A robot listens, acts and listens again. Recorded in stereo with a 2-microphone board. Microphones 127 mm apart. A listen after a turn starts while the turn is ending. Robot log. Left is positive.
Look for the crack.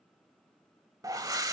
cmd idle
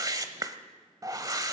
cmd idle
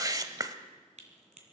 note: The crack: about 65° right or 115° right.
cmd yaw -65
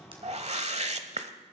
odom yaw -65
cmd idle
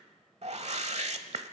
end: I heard a crack, but can't make it out now. It was about straight ahead or 50° right.